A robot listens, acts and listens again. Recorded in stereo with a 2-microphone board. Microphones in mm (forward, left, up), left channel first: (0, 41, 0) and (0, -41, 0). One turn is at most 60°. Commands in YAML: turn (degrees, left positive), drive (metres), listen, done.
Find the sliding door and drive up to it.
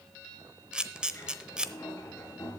turn: 35
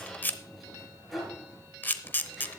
drive: 1.0
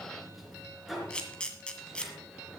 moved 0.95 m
drive: 1.0
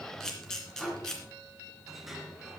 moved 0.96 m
drive: 1.0
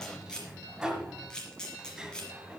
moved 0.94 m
turn: -10
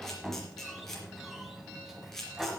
drive: 1.0
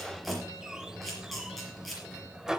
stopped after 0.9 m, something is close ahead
turn: -10
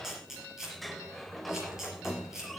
done: "Arrived at the sliding door, straight ahead."